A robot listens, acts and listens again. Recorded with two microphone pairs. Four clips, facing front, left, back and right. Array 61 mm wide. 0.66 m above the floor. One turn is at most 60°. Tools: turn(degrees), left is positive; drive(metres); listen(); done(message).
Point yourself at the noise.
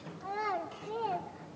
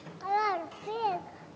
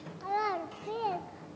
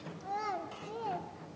turn(degrees=60)
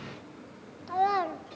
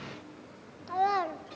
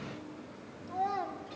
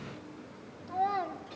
turn(degrees=50)
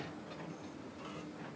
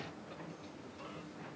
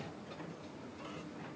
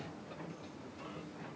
listen()
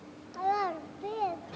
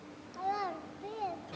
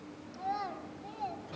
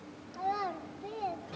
done("Facing the child speaking, under 1 m away.")